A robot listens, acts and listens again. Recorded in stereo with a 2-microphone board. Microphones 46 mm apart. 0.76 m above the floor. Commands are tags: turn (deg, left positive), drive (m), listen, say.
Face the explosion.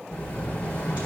<turn deg="20"/>
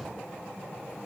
<listen/>
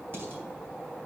<say>I heard an explosion, but can't make it out now. It was about straight ahead or 140° left.</say>